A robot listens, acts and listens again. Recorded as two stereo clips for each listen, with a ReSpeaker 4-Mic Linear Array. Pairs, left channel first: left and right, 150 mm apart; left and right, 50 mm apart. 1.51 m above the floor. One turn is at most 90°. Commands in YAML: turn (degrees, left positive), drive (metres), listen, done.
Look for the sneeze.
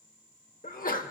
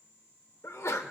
turn: 65
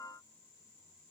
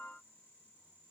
listen: true
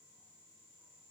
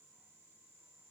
done: "I heard a sneeze, but can't make it out now. It was about straight ahead or 50° left."